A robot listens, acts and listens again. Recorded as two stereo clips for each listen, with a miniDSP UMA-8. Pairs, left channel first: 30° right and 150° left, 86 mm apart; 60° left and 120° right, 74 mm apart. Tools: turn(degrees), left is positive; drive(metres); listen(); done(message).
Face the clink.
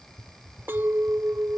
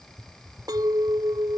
turn(degrees=-145)
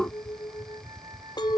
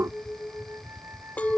turn(degrees=-10)
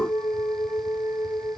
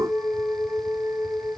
done("Found it: a clink, straight ahead.")